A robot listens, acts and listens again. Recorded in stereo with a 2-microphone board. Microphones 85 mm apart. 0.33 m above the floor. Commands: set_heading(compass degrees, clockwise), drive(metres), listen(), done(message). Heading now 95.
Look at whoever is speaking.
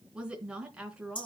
set_heading(125)
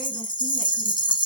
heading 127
listen()
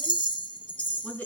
set_heading(107)
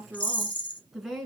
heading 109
done("Facing the woman speaking, 2 to 4 m away.")